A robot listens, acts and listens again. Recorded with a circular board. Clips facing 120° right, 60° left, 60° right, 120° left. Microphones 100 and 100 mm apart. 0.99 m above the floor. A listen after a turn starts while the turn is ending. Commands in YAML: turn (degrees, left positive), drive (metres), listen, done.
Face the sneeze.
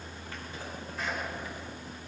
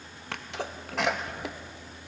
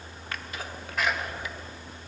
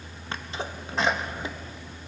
turn: 60
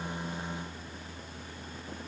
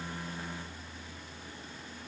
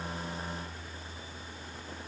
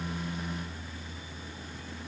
done: "Facing where the sneeze came from. I can't hear it now."